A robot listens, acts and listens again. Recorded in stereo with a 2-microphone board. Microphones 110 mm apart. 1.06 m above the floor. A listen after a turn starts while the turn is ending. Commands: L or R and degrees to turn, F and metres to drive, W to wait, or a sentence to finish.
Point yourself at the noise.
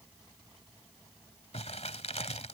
L75
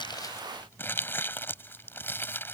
L20
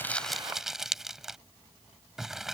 Facing the crumpling.